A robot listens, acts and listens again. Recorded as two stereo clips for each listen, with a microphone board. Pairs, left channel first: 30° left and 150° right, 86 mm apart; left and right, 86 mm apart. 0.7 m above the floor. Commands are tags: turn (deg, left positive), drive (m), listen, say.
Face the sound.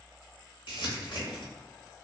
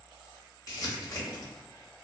<turn deg="40"/>
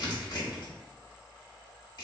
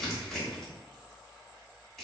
<say>Facing the crumpling, 1 to 2 m away.</say>